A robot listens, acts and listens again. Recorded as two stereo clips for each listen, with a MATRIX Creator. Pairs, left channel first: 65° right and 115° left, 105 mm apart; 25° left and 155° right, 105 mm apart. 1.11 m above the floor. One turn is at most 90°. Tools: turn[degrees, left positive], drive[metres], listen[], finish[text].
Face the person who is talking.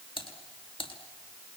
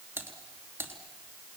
Action: listen[]
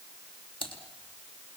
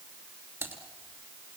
Action: listen[]
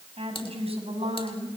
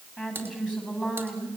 Thought: The woman speaking: 120° left.
Action: turn[90]
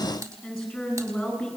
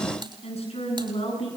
Thought: The woman speaking is now 20° left.
Action: turn[20]
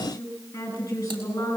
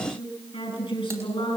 Action: finish[Found it: a woman speaking, straight ahead, over 4 m away.]